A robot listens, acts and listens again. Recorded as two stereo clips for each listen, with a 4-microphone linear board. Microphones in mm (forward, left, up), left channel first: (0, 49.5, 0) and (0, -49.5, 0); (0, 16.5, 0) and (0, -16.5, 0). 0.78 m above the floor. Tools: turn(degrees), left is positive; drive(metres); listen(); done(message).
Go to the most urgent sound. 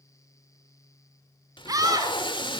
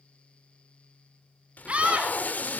turn(degrees=-40)
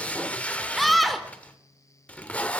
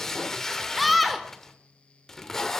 drive(metres=1.0)
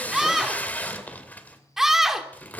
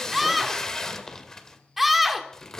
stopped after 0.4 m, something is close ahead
done("Something is in my way. I am facing the scream but have not reached it.")